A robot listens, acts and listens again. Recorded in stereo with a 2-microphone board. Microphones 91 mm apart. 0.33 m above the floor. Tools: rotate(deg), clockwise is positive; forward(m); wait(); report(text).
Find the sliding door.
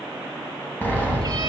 rotate(-15)
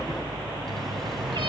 report("Found it: a sliding door, straight ahead, 2 to 4 m away.")